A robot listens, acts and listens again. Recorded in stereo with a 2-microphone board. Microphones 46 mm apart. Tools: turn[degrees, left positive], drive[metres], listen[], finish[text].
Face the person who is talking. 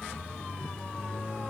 Action: listen[]
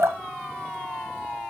Action: listen[]
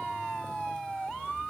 Action: finish[I can't make out anyone speaking, only dripping.]